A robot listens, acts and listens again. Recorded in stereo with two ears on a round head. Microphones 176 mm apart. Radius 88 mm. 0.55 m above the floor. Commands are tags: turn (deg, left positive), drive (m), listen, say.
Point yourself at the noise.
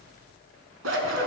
<turn deg="-70"/>
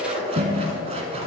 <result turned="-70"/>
<turn deg="-35"/>
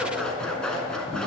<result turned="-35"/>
<say>Found it: scissors, straight ahead.</say>